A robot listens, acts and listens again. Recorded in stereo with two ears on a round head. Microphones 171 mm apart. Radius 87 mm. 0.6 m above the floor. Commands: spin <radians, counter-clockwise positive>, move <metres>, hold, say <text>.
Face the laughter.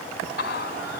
spin 0.96
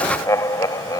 spin 0.35
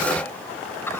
hold
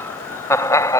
spin 0.26
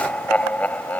spin 0.17
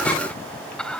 say Facing the laughter.